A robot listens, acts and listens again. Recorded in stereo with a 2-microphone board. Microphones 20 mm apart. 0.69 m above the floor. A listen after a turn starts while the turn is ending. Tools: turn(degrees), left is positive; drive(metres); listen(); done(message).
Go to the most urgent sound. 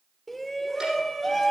turn(degrees=30)
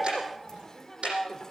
turn(degrees=150)
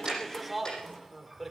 drive(metres=1.0)
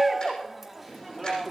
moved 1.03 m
drive(metres=1.0)
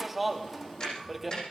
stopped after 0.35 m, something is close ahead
done("I am next to the shout.")